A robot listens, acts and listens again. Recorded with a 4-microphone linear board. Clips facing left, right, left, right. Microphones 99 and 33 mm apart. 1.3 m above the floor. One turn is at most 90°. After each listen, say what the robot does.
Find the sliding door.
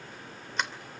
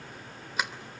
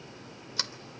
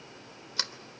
Turn 30° right.
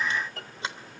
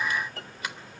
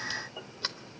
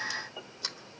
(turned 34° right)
Turn 30° left.
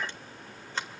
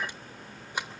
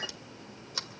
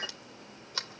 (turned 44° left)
Turn 15° right.
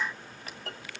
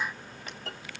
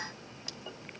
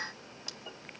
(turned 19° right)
Keep listening.
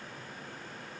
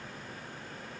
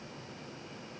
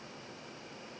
Keep listening.
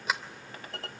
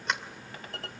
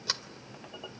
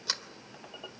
Found it: a sliding door, straight ahead, 2 to 4 m away.